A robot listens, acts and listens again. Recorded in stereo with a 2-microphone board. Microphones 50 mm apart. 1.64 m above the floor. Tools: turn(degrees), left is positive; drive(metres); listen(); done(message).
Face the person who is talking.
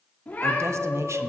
turn(degrees=-90)
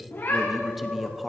done("Found it: a man speaking, straight ahead, under 1 m away.")